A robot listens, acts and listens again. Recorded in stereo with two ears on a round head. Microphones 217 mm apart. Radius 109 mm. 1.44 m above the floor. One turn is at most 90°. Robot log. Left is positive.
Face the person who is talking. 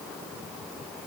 cmd idle
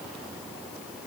cmd idle
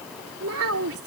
note: The child speaking: about 65° right or 115° right.
cmd yaw -65
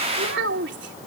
note: So it is at 50° right.
cmd yaw -50
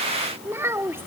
note: The child speaking is now 10° right.
cmd yaw -10
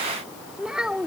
end: Facing the child speaking.